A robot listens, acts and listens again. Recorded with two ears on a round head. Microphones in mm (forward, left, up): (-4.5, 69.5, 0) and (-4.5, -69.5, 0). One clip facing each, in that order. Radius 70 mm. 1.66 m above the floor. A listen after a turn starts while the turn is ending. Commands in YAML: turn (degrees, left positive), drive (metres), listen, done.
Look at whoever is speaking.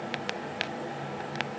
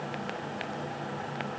listen: true
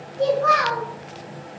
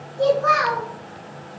turn: -30
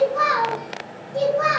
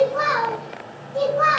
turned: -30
turn: 25
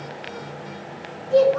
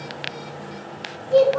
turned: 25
turn: -15
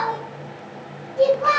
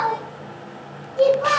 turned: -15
done: "Found it: a child speaking, straight ahead."